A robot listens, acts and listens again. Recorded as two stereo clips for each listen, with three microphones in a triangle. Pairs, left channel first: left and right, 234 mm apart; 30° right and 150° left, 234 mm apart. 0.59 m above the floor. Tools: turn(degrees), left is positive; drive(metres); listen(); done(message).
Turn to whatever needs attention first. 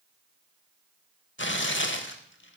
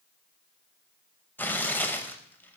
listen()
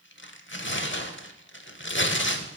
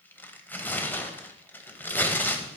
listen()
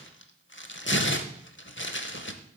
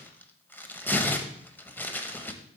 done("I can't make out anything urgent, only tearing paper.")